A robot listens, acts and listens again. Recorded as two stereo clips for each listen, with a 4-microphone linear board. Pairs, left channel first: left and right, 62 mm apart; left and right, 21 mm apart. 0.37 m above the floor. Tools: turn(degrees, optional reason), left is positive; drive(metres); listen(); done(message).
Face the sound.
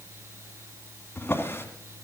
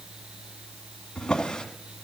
turn(degrees=40, reason="The drawer: about 40° left or 140° left.")
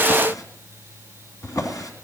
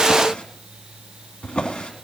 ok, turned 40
turn(degrees=100, reason="So it is at 100° left.")
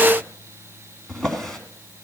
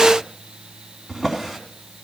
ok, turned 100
turn(degrees=10, reason="The drawer is now 10° left.")
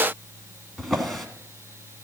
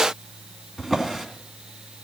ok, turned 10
done("Facing the drawer, 2 to 4 m away.")